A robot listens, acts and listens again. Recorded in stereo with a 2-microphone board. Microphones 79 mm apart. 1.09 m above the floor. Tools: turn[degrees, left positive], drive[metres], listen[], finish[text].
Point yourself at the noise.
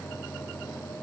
Action: listen[]
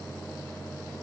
Action: listen[]
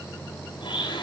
Action: turn[90]
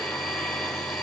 Thought: So it is at 10° left.
Action: turn[10]
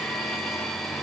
Action: finish[Facing the blender, over 4 m away.]